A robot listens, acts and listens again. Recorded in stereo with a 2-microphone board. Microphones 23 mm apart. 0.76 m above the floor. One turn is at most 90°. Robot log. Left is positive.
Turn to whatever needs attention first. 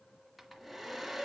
cmd idle
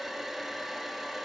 cmd idle
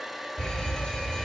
note: The fire alarm: about 30° left or 150° left.
cmd yaw +30
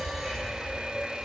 end: Found it: a fire alarm, straight ahead.